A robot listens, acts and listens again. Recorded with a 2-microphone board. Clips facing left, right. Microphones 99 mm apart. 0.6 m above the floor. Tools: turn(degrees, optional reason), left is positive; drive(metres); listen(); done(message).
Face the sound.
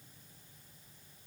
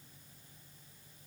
listen()
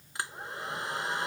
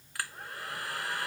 turn(degrees=20, reason="The hair dryer: about 20° left or 160° left.")
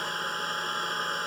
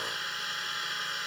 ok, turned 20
turn(degrees=140, reason="So it is at 140° left.")
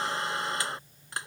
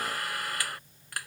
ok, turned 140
turn(degrees=25, reason="The hair dryer is now 25° left.")
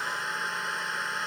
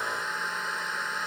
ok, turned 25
done("Found it: a hair dryer, straight ahead.")